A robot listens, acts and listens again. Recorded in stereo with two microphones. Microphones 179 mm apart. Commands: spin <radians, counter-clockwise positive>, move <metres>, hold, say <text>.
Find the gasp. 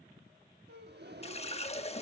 spin -1.22
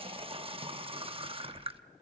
hold
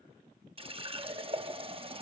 say I heard a gasp, but can't make it out now. It was about straight ahead or 40° right.